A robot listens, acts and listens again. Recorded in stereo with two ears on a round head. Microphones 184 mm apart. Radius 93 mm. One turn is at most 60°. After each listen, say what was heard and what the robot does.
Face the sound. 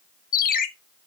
The ringtone: about 45° left or 135° left. Turn 45° left.
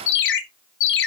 So it is at 80° left. Turn 60° left.
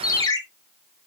The ringtone is now 20° left. Turn 20° left.
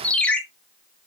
Found it: a ringtone, straight ahead.